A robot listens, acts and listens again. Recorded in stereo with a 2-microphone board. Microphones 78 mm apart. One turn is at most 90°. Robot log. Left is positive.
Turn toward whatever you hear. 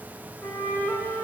note: The flute: about 20° left or 160° left.
cmd yaw +20
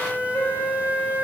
note: So it is at 140° left.
cmd yaw +90
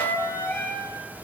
note: The flute is now 35° left.
cmd yaw +35
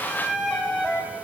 end: Found it: a flute, straight ahead, 2 to 4 m away.